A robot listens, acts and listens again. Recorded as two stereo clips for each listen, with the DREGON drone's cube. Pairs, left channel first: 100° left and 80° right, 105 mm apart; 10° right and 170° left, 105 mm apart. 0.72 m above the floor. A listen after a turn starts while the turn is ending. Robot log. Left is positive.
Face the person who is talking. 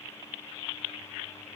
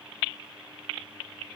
cmd idle
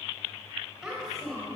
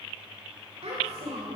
note: The child speaking: 170° right.
cmd yaw -170
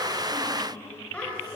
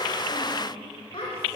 note: The child speaking is now 20° left.
cmd yaw +20
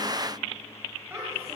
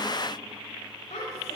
note: The child speaking is now 10° right.
cmd yaw -10
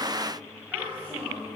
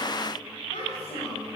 end: Found it: a child speaking, straight ahead.